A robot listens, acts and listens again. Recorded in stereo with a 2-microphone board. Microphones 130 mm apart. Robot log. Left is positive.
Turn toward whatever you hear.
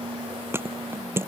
note: The thud: about 15° right or 165° right.
cmd yaw -15
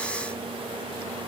cmd idle
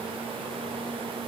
end: I heard a thud, but can't make it out now. It was about straight ahead or 150° right.